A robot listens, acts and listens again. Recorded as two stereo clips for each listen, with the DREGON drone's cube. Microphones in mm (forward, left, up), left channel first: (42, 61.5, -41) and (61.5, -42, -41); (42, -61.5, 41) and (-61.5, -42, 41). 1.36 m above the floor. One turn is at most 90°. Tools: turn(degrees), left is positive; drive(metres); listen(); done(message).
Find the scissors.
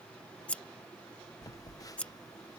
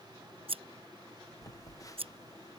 turn(degrees=90)
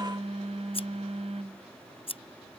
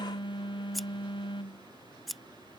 turn(degrees=80)
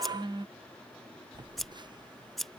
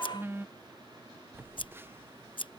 turn(degrees=15)
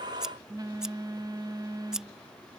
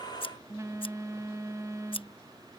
done("Facing the scissors.")